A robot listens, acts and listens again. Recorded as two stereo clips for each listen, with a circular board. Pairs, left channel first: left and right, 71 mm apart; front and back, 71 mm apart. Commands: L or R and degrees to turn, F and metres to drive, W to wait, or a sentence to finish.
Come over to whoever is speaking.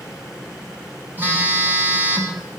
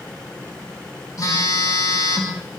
W
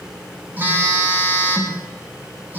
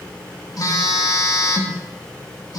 W
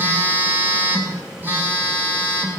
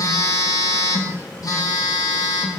I can't make out anyone speaking, only a phone buzzing.